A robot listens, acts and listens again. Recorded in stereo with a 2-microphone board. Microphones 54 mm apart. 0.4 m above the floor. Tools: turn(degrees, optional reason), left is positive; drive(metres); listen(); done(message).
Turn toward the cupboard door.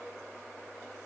listen()
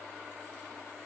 listen()
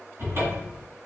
turn(degrees=-45, reason="The cupboard door: about 45° right or 135° right.")
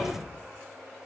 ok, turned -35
turn(degrees=-10, reason="So it is at 10° right.")
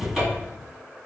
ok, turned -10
done("Found it: a cupboard door, straight ahead, 1 to 2 m away.")